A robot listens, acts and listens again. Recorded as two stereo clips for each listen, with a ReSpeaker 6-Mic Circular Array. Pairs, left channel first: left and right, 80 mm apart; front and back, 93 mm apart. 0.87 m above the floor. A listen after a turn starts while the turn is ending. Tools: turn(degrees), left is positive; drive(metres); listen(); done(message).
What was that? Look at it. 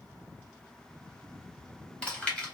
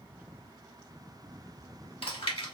turn(degrees=10)
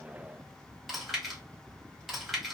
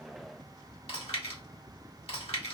done("Found it: chewing, straight ahead, 1 to 2 m away.")